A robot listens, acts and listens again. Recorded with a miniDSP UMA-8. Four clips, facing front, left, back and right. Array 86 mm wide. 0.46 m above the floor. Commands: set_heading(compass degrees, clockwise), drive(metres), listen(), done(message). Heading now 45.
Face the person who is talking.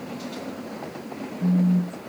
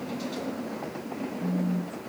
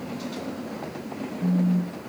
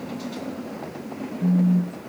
listen()
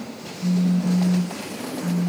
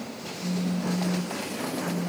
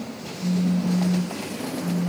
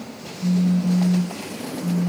listen()
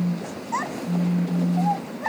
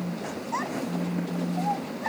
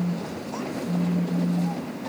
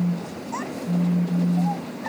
set_heading(35)
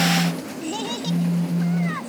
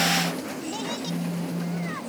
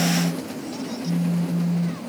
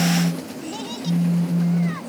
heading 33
listen()
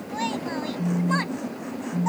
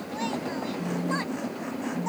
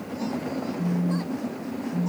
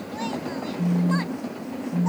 listen()
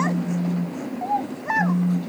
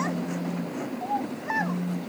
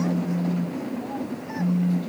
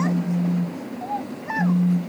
done("Found it: a child speaking, straight ahead.")